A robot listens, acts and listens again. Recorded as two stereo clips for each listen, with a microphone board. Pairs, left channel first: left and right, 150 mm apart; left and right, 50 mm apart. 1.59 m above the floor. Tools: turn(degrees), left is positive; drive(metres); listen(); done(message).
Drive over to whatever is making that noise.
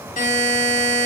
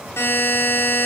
turn(degrees=55)
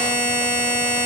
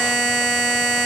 turn(degrees=10)
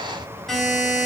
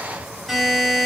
drive(metres=1.0)
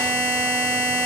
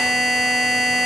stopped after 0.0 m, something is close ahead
turn(degrees=10)
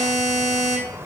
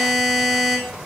done("Blocked. The buzzer is further on, straight ahead.")